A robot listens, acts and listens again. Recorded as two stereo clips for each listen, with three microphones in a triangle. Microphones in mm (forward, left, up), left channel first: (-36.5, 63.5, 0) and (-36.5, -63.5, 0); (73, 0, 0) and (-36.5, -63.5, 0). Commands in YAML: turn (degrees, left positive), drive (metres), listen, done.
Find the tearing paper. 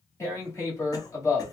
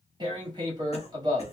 turn: 155
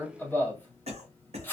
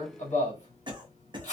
turn: 15
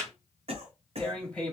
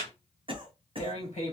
turn: 10
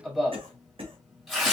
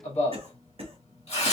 done: "Facing the tearing paper."